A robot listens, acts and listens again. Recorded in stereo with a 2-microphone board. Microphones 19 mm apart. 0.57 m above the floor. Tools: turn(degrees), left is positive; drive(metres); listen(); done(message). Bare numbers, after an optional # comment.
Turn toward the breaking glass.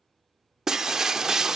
# The breaking glass: about 30° right or 150° right.
turn(-30)
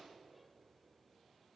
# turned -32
listen()
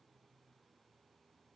done("I heard breaking glass, but can't make it out now. It was about 5° left or 120° right.")